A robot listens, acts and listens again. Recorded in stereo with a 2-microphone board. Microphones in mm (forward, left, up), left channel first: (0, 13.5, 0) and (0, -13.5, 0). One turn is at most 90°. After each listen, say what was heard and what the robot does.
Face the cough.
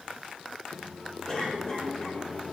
The cough: about 20° left or 160° left. Turn 20° left.
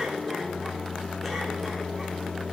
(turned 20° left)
Keep listening.
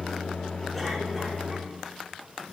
Keep listening.
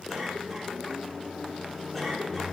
Facing the cough, over 4 m away.